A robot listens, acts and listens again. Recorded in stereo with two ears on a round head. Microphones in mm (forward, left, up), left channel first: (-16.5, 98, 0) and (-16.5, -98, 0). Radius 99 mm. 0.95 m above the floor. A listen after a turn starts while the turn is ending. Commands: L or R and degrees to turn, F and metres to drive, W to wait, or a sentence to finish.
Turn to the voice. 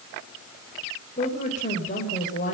L35
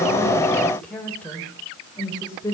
L15
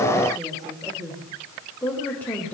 L10
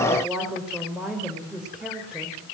Facing the woman speaking, over 4 m away.